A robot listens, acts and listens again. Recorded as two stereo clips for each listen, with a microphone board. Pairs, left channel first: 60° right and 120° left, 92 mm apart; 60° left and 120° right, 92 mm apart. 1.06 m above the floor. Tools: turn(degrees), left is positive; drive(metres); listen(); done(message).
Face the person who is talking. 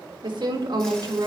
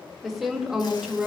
turn(degrees=165)
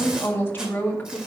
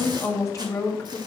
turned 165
turn(degrees=10)
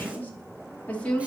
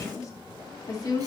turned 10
turn(degrees=15)
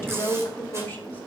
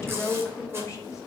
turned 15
done("Facing the woman speaking.")